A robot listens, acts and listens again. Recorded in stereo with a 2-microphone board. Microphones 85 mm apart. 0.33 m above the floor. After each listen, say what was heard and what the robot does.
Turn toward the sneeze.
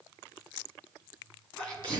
Turn 30° left.
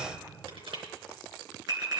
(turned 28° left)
Keep listening.
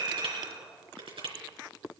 I heard a sneeze, but can't make it out now. It was about 15° right or 140° left.